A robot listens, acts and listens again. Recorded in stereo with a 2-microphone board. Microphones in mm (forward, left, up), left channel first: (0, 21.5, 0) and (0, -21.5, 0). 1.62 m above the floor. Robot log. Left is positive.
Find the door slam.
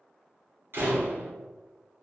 note: The door slam: about 55° right or 125° right.
cmd yaw -55
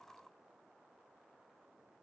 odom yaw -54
cmd idle
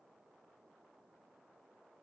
end: I heard a door slam, but can't make it out now. It was about 5° right or 70° right.